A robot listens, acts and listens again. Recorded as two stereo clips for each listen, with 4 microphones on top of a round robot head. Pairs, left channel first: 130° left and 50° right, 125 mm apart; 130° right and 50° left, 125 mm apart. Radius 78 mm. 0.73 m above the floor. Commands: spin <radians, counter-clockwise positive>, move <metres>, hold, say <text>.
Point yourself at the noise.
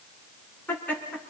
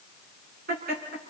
spin 0.87
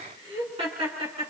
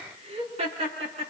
say Found it: laughter, straight ahead.